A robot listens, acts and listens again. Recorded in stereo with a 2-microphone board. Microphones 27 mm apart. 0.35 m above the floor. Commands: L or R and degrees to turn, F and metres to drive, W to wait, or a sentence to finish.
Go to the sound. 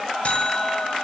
L55
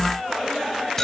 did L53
L20
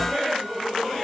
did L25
W
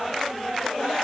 W
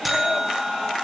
F1.0
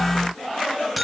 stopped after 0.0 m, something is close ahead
Something is in my way. I am facing the buzzer but have not reached it.